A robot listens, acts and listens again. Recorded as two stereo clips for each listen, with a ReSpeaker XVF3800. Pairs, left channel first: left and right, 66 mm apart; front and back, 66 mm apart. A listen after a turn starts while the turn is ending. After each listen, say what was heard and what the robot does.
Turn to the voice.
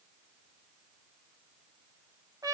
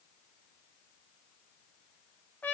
Keep listening.
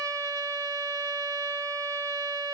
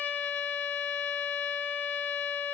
Keep listening.
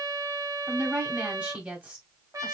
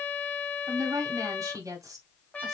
The woman speaking: 160° right. Turn 160° right.
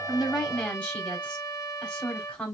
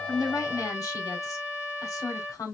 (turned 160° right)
The woman speaking is now 20° left. Turn 20° left.
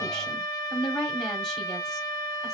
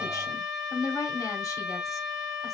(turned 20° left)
Facing the woman speaking, 1 to 2 m away.